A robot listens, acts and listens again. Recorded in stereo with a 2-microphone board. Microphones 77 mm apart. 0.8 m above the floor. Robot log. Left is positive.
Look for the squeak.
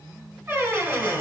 note: The squeak: about 30° right or 150° right.
cmd yaw -30
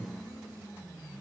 cmd idle
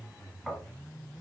end: Facing the squeak.